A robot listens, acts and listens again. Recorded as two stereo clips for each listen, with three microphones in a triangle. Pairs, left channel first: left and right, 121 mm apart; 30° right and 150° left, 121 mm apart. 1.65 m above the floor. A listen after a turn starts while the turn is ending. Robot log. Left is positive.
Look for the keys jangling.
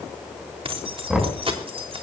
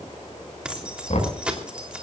note: The keys jangling: 130° right.
cmd yaw -130
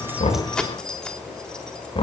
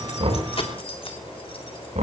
end: Facing the keys jangling, 2 to 4 m away.